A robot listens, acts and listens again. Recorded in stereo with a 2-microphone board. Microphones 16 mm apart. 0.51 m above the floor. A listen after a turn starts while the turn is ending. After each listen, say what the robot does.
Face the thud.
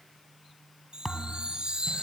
Turn 30° left.
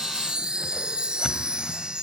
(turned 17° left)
Keep listening.
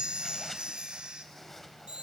I heard a thud, but can't make it out now. It was about 5° right or 150° left.